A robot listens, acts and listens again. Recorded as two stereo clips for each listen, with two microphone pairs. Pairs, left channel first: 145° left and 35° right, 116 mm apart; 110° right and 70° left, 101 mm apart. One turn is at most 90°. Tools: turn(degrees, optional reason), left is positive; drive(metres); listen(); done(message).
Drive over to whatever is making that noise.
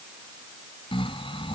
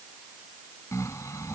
turn(degrees=-90, reason="The snoring: 170° right.")
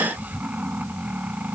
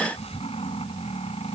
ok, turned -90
turn(degrees=-90, reason="The snoring is now 110° right.")
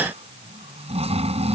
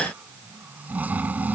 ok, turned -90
drive(metres=1.0)
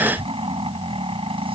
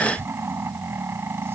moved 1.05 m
drive(metres=1.0)
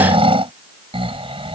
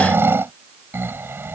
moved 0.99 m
drive(metres=1.0)
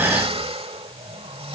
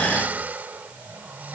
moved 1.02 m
drive(metres=1.0)
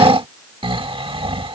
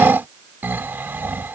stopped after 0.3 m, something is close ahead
done("Arrived at the snoring, straight ahead.")